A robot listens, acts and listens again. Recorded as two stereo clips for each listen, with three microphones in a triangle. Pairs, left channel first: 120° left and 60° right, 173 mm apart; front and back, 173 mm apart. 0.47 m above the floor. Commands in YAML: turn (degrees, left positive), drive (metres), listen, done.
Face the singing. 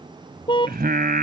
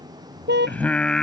turn: -85
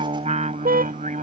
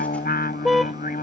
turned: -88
turn: -25
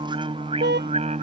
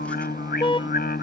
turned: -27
turn: -15
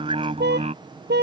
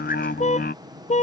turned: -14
turn: -10
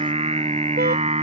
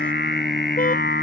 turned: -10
turn: -10
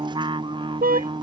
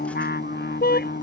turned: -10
done: "Facing the singing."